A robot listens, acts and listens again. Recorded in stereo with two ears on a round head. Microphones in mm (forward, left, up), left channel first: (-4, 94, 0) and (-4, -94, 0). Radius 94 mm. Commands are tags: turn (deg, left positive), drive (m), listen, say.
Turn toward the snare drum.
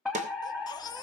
<turn deg="-35"/>
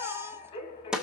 <say>Found it: a snare drum, straight ahead.</say>